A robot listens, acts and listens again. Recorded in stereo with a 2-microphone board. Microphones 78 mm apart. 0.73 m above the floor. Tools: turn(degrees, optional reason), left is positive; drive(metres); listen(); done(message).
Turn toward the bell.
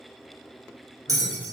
turn(degrees=-50, reason="The bell: about 50° right or 130° right.")
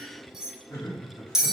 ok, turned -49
turn(degrees=-10, reason="So it is at 10° right.")
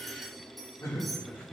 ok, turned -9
listen()
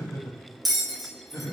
done("Facing the bell, under 1 m away.")